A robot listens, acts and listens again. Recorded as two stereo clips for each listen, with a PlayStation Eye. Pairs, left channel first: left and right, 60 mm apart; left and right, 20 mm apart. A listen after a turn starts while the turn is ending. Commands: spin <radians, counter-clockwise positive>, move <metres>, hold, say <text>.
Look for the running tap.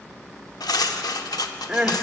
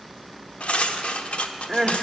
hold
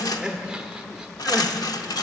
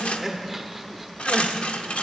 hold
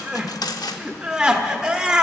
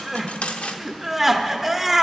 say I can't make out a running tap to turn to.